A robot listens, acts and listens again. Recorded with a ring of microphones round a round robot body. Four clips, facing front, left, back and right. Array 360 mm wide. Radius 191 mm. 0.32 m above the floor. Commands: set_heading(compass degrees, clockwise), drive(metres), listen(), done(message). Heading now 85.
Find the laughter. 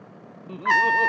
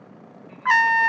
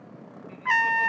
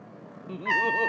set_heading(130)
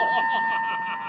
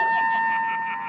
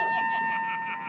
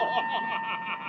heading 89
set_heading(129)
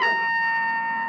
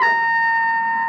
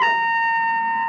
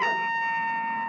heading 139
set_heading(129)
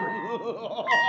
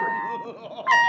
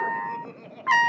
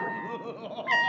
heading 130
done("Facing the laughter.")